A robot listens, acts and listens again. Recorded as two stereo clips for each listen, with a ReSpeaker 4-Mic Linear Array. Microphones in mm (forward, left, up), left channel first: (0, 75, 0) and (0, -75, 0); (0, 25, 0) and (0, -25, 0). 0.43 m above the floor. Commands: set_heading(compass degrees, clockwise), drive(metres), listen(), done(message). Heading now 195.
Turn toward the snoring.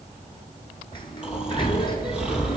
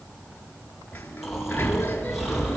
set_heading(225)
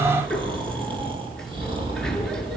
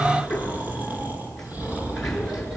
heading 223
set_heading(13)
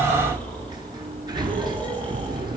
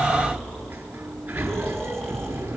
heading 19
set_heading(9)
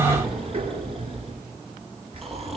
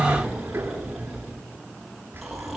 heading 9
done("Facing the snoring.")